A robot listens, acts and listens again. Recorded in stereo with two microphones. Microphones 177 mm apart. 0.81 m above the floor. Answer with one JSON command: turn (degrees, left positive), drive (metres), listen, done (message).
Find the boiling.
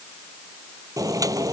{"turn": -20}
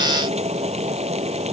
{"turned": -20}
{"turn": -145}
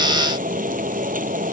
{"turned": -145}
{"turn": -50}
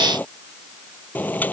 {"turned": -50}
{"turn": 10}
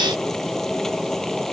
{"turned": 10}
{"done": "Facing the boiling."}